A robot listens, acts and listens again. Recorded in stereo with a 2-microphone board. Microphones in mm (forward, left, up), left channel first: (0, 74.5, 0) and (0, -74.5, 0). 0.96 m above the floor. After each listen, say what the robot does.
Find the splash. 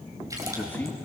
Turn 20° right.
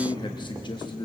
Keep listening.
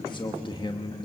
I heard a splash, but can't make it out now. It was about straight ahead or 140° right.